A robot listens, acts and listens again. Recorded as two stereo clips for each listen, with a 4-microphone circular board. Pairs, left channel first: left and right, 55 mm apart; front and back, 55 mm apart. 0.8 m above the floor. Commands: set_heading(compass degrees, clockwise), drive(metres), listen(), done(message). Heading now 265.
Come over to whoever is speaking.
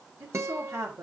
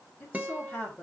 set_heading(335)
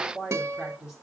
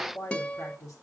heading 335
set_heading(350)
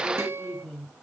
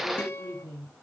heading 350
drive(1.0)
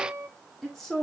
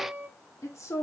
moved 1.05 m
drive(1.0)
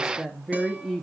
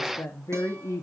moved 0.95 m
drive(1.0)
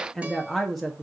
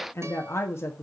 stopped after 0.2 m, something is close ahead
done("I am next to the woman speaking.")